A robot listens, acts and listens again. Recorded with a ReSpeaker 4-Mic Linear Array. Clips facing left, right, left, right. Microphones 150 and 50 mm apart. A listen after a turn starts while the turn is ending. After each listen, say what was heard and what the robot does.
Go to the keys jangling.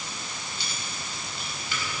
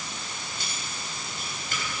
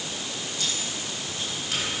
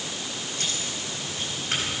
The keys jangling: about 45° right or 135° right. Turn 45° right.
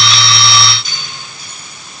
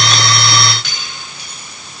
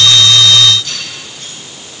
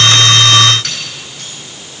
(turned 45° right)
So it is at 85° right. Turn 85° right.
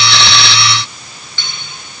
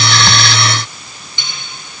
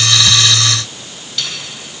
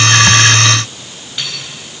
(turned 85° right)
The keys jangling is now 20° right. Turn 20° right.
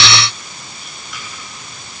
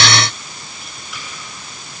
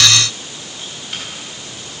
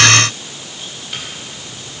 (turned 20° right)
Keep listening.
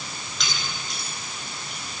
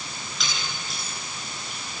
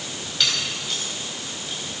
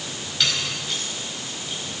Drive 1.0 m forward.
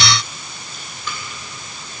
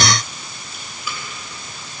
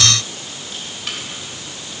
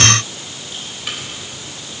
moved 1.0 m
Drive 1.0 m forward.
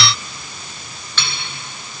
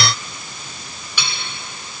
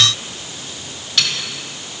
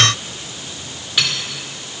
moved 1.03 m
The keys jangling is now 10° right. Turn 10° right.
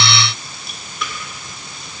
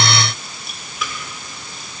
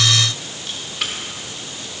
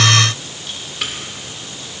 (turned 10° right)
Drive 1.0 m forward.
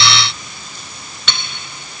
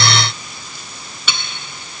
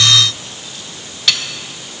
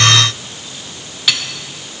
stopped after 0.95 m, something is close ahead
The keys jangling is now 10° right. Turn 10° right.
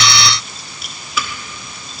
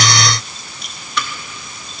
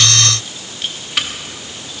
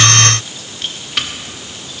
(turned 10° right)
I am next to the keys jangling.